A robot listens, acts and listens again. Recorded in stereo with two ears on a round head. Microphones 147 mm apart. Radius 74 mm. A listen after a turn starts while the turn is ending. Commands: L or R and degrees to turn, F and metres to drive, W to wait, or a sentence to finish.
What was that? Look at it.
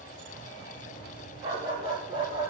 R30
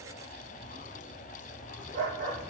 R130
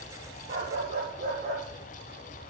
R50
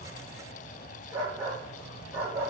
R15
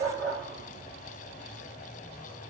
Facing the dog barking.